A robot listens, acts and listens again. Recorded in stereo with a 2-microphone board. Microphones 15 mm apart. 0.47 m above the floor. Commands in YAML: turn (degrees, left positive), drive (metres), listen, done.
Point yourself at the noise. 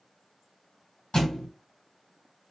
turn: 50
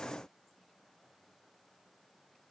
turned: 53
listen: true
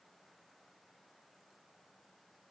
done: "I heard a thud, but can't make it out now. It was about straight ahead or 75° left."